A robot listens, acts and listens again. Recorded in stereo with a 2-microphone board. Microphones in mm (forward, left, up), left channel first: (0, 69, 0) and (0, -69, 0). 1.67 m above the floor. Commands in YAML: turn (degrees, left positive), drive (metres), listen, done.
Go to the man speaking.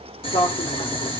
turn: 90
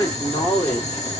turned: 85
turn: 20
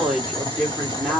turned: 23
drive: 1.0
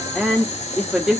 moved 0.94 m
drive: 1.0
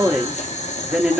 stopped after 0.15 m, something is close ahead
turn: -10
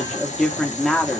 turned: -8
done: "I am next to the man speaking."